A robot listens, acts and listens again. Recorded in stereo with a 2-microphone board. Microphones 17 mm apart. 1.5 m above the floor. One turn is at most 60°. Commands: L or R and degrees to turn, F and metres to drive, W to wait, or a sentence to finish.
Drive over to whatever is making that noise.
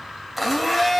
R30
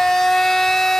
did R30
L25
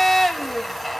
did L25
F1.0
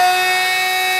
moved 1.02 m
F1.0
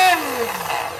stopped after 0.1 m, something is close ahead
Arrived at the blender, straight ahead.